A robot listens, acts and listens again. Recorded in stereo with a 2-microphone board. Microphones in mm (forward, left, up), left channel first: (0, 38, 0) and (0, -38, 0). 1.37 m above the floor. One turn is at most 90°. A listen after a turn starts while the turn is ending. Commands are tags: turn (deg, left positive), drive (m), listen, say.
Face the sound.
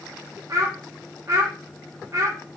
<turn deg="-40"/>
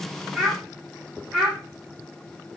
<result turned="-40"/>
<say>Facing the child speaking, 1 to 2 m away.</say>